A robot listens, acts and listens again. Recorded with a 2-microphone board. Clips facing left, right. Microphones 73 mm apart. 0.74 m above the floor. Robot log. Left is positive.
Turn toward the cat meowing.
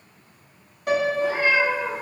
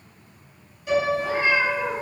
note: The cat meowing: about 25° right or 155° right.
cmd yaw -25
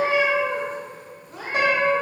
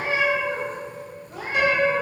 note: So it is at 115° right.
cmd yaw -115
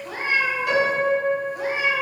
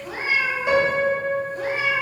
note: The cat meowing is now 15° left.
cmd yaw +15
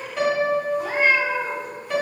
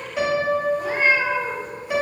end: Facing the cat meowing.